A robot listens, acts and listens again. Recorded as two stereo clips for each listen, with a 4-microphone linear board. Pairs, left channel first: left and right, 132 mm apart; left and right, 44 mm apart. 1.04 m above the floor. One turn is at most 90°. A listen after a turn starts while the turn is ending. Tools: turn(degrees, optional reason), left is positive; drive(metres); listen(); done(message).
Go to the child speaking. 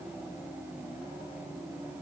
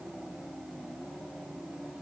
listen()
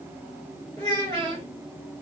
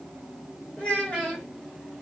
turn(degrees=35, reason="The child speaking: about 35° left or 145° left.")
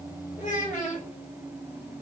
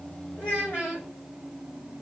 turn(degrees=90, reason="So it is at 110° left.")
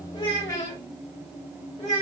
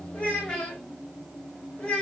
turn(degrees=25, reason="The child speaking is now 25° left.")
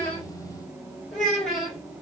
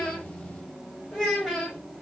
drive(metres=1.0)
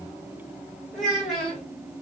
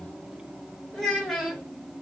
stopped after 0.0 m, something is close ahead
done("Something is in my way. I am facing the child speaking but have not reached it.")